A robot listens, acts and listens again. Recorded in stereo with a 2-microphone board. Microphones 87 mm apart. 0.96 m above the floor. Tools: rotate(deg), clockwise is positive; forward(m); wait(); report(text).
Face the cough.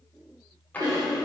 rotate(50)
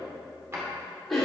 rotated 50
report("Facing the cough.")